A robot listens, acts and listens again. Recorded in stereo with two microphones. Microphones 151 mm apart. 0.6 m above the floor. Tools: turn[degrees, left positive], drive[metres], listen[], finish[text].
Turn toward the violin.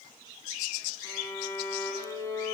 Thought: The violin: about 20° left or 160° left.
Action: turn[20]
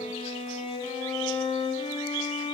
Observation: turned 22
Thought: So it is at 140° left.
Action: turn[140]
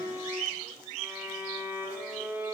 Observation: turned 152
Thought: The violin is now 15° right.
Action: turn[-15]
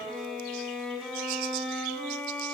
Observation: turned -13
Action: finish[Facing the violin.]